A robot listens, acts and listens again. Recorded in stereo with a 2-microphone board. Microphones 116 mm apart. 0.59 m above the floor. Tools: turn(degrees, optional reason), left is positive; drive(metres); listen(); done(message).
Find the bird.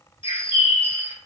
turn(degrees=50, reason="The bird: about 50° left or 130° left.")
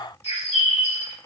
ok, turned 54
turn(degrees=70, reason="So it is at 70° left.")
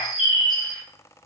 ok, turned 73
done("Found it: a bird, straight ahead.")